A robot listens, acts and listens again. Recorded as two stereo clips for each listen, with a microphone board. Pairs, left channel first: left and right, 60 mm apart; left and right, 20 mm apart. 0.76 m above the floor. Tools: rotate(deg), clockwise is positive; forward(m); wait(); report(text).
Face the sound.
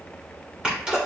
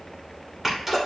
rotate(15)
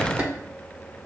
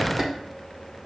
rotate(150)
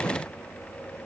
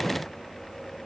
report("I heard a sneeze from this way, but can't make it out now.")